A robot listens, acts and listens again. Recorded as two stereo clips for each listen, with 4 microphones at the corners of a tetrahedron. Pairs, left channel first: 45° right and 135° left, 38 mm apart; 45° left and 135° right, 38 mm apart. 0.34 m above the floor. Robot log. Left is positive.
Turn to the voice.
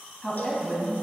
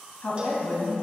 note: The woman speaking: 25° left.
cmd yaw +25
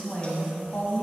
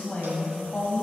note: The woman speaking is now 15° right.
cmd yaw -15
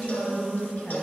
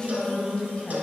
note: The woman speaking is now 20° right.
cmd yaw -20
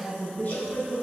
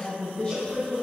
note: The woman speaking is now 20° right.
cmd yaw -20
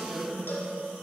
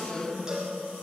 note: The woman speaking is now 15° right.
cmd yaw -15
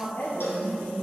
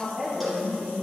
note: The woman speaking is now 15° right.
cmd yaw -15
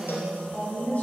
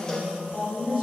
end: Found it: a woman speaking, straight ahead, 1 to 2 m away.